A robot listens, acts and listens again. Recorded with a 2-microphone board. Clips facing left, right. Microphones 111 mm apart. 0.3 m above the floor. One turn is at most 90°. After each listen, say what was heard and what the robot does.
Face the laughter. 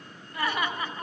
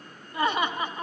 The laughter: about 15° right or 165° right. Turn 15° right.
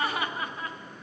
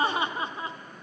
The laughter: about 20° right or 160° right. Turn 20° right.
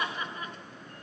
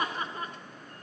The laughter: about 35° right or 145° right. Turn 35° right.
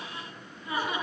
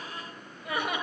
So it is at 120° right. Turn 90° right.
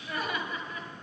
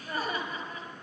The laughter is now 40° right. Turn 40° right.
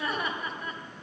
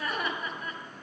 Found it: laughter, straight ahead.